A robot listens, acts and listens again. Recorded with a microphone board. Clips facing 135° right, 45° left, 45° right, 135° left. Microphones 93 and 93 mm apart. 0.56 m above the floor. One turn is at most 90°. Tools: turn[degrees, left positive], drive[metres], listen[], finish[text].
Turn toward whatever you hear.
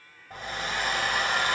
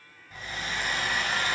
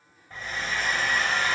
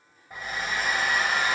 Thought: The hair dryer: 150° right.
Action: turn[-90]
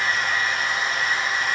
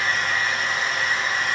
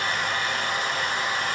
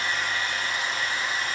Thought: The hair dryer is now 50° right.
Action: turn[-50]
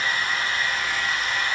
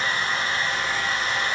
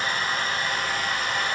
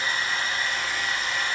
Thought: The hair dryer is now 15° right.
Action: turn[-15]
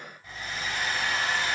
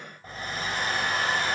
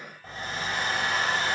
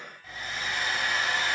Action: finish[Facing the hair dryer, 2 to 4 m away.]